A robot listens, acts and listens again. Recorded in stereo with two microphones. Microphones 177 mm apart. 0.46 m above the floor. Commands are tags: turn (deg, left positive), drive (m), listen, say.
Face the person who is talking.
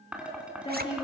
<turn deg="30"/>
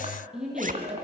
<say>Facing the woman speaking.</say>